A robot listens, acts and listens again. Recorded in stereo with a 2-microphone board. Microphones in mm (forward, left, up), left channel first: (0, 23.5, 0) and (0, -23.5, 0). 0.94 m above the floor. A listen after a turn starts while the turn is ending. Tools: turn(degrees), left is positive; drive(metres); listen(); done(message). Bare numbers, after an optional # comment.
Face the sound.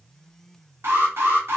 # The alarm: about 70° right or 110° right.
turn(-70)
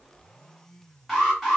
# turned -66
done("Found it: an alarm, straight ahead, 1 to 2 m away.")